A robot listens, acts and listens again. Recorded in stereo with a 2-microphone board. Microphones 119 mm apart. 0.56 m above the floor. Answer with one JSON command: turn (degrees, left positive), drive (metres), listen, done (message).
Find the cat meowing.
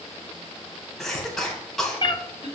{"turn": 40}
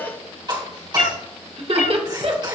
{"turn": 100}
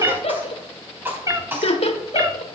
{"turn": -30}
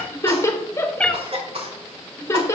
{"turn": 10}
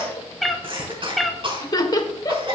{"done": "Found it: a cat meowing, straight ahead."}